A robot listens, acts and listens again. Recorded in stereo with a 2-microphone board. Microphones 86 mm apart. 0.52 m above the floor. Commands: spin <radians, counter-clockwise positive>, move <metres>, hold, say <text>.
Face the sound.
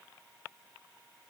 hold
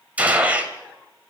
spin -0.26
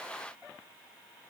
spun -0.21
hold
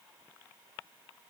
say I heard a gunshot, but can't make it out now. It was about 5° right or 150° right.